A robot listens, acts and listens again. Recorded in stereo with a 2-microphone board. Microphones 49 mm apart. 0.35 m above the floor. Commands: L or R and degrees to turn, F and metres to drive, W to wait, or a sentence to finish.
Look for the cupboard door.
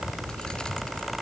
W
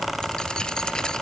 W
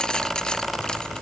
I can't make out a cupboard door.